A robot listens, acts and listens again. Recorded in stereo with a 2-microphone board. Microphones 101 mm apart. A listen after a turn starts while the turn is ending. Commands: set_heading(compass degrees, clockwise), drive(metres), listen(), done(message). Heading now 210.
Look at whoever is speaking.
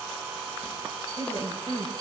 set_heading(160)
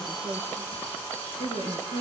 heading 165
set_heading(80)
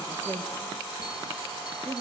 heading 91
set_heading(81)
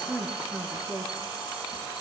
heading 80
done("Found it: a woman speaking, straight ahead, over 4 m away.")